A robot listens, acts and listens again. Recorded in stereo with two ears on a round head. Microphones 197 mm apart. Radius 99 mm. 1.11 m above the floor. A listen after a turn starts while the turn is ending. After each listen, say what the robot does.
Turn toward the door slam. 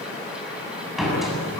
Turn 30° left.
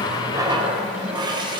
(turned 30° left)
Keep listening.
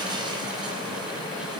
I heard a door slam, but can't make it out now. It was about 30° right or 150° left.